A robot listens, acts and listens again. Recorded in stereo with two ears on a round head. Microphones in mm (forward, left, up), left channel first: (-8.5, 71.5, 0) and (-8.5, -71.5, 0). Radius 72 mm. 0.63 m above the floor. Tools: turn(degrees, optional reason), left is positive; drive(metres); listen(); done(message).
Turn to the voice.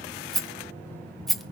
listen()
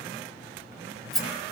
listen()
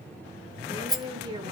turn(degrees=-30, reason="The woman speaking: about 30° right or 150° right.")
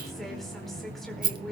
done("Facing the woman speaking.")